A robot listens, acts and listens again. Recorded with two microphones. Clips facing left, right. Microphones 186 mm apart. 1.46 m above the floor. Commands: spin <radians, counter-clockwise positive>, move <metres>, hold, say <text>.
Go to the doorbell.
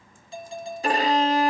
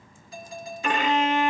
spin 0.52
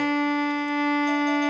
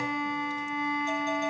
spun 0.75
hold
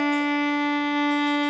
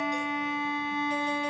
hold
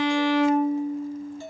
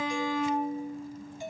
spin -0.26
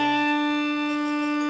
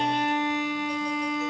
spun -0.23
hold
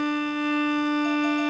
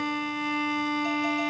hold
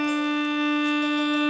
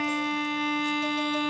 say Facing where the doorbell came from. I can't hear it now. I did not reach it.